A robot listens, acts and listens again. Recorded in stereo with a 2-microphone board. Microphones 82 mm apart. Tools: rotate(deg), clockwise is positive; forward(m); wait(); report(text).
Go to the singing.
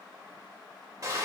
wait()
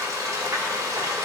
wait()
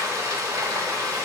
report("I can't make out singing, only frying.")